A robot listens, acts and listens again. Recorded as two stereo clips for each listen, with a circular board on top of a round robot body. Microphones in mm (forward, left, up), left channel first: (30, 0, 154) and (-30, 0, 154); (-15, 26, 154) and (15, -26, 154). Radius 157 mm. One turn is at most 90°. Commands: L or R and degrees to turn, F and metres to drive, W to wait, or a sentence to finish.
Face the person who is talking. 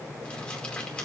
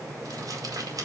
W
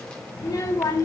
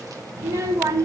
R25
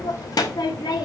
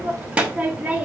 L10
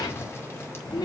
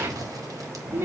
Facing the child speaking.